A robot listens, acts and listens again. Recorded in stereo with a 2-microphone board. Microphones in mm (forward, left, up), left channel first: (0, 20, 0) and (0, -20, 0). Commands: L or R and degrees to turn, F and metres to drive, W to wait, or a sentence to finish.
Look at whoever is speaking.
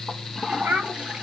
R55
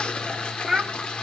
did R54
Found it: a child speaking, straight ahead, 2 to 4 m away.